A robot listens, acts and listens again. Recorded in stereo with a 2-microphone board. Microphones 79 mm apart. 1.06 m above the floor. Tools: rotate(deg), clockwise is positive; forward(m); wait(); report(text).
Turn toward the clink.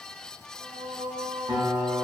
wait()
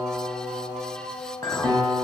rotate(-50)
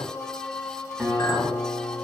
wait()
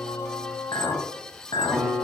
rotate(-80)
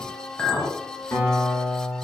rotate(-15)
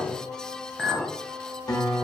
report("Facing the clink, under 1 m away.")